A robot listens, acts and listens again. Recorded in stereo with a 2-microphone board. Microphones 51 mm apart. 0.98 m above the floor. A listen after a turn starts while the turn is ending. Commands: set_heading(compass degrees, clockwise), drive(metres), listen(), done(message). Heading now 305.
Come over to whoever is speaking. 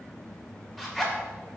listen()
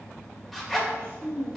set_heading(355)
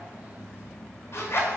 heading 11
listen()
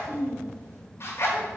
set_heading(76)
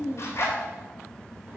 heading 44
set_heading(74)
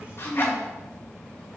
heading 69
drive(1.0)
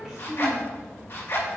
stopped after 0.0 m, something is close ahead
done("Blocked. The child speaking is further on, straight ahead.")